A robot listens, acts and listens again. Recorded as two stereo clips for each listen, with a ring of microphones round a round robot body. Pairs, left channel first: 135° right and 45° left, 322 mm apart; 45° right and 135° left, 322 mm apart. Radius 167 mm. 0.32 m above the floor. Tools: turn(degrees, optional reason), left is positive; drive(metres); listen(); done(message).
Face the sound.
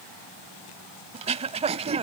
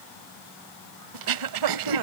turn(degrees=115, reason="The throat clearing: 115° left.")
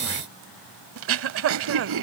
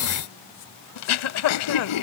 done("Found it: throat clearing, straight ahead.")